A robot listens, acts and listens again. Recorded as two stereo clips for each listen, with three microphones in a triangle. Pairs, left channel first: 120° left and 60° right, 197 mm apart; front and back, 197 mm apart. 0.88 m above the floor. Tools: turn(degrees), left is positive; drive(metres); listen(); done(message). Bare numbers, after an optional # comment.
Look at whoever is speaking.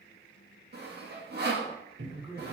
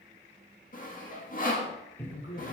# The man speaking: 20° left.
turn(20)
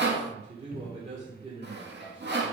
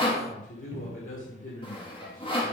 done("Facing the man speaking.")